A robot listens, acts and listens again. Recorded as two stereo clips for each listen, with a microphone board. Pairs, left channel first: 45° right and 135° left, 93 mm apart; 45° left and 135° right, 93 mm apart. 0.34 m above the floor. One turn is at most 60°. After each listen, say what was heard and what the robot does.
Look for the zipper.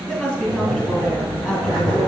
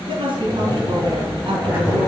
The zipper: 65° right. Turn 60° right.
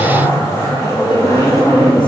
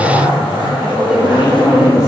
The zipper is now 10° left. Turn 10° left.
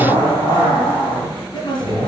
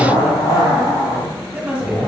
Facing the zipper, 2 to 4 m away.